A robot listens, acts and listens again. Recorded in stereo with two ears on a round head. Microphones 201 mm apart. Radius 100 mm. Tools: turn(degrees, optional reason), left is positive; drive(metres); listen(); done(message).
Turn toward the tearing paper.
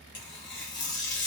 turn(degrees=50, reason="The tearing paper: about 50° left or 130° left.")
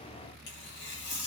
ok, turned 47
turn(degrees=70, reason="So it is at 70° left.")
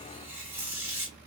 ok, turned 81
turn(degrees=-15, reason="The tearing paper is now 15° right.")
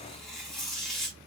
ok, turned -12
done("Found it: tearing paper, straight ahead.")